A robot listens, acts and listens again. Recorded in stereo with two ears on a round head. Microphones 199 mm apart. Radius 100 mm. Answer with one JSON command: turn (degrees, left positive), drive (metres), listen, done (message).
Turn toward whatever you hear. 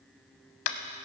{"turn": 65}
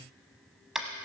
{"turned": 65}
{"done": "Facing the tapping, under 1 m away."}